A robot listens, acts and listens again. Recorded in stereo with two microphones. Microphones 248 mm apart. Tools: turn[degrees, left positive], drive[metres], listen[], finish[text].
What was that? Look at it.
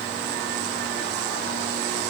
Action: listen[]
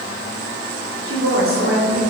Thought: The woman speaking: about 65° right or 115° right.
Action: turn[-65]
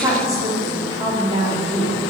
Thought: So it is at 25° right.
Action: turn[-25]
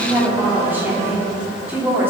Thought: The woman speaking is now 10° right.
Action: turn[-10]
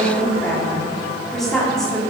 Action: finish[Found it: a woman speaking, straight ahead, 2 to 4 m away.]